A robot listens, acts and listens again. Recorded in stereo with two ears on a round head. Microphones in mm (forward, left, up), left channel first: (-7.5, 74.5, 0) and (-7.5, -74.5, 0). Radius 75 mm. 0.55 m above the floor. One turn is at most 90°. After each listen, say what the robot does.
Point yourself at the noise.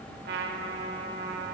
Turn 65° right.
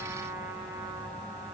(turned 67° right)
Turn 15° right.
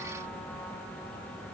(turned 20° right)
Keep listening.
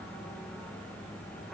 Keep listening.
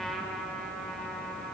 Found it: a trumpet, straight ahead, 1 to 2 m away.